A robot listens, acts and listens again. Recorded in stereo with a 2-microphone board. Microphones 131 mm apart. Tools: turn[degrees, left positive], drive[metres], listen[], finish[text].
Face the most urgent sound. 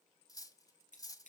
Action: listen[]
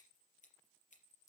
Action: listen[]
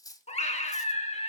Thought: The scream: about 55° left or 125° left.
Action: turn[55]
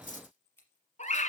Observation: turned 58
Thought: So it is at 65° left.
Action: turn[65]
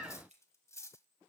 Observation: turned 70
Action: finish[Facing the scream, 2 to 4 m away.]